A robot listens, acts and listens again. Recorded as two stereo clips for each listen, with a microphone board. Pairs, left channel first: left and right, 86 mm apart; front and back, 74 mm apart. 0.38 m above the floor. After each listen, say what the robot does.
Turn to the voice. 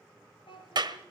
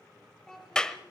Turn 80° left.
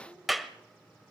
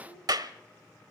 Keep listening.
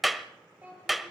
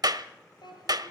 Turn 15° right.
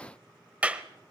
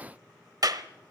Keep listening.
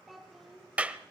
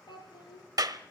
Found it: a child speaking, straight ahead.